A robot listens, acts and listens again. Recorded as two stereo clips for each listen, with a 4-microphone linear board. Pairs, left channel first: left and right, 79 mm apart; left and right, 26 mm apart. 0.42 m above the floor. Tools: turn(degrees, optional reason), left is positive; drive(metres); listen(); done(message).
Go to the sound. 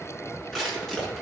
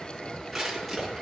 turn(degrees=30)
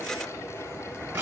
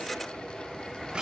turn(degrees=-25, reason="So it is at 25° right.")
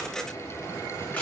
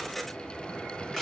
turn(degrees=20, reason="The crushing is now 20° left.")
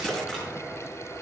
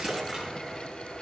listen()
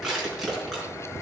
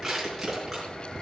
drive(metres=1.0)
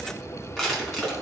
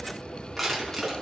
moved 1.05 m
drive(metres=1.0)
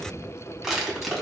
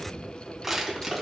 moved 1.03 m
drive(metres=1.0)
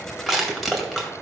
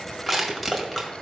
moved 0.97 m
drive(metres=1.0)
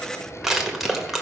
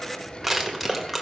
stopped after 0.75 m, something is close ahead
done("Arrived at the crushing, straight ahead.")